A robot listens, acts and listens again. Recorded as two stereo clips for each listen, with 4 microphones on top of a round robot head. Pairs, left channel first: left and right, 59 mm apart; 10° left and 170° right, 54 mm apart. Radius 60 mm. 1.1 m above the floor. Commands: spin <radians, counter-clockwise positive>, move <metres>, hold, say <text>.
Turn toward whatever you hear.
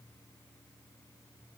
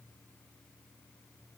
hold
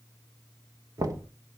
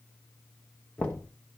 spin -1.13
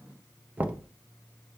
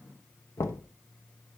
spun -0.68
spin -0.44
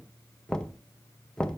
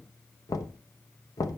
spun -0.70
spin 0.17
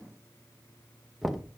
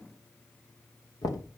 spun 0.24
say Found it: knocking, straight ahead.